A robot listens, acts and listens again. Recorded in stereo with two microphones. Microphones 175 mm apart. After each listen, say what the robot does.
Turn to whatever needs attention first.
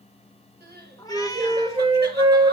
Turn 90° right.
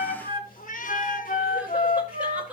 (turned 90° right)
Found it: crying, straight ahead.